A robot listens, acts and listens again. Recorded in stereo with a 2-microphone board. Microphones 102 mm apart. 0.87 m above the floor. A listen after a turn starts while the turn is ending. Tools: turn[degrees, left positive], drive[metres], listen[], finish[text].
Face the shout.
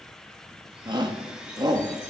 Thought: The shout: about 40° right or 140° right.
Action: turn[-40]
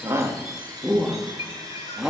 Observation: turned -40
Action: finish[Facing the shout.]